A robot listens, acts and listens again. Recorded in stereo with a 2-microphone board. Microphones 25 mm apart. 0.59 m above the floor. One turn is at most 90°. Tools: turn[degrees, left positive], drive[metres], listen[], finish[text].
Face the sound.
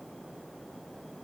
Action: listen[]
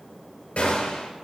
Thought: The gunshot: about 60° left or 120° left.
Action: turn[60]
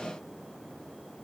Action: listen[]
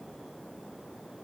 Action: finish[I heard a gunshot, but can't make it out now. It was about straight ahead or 60° left.]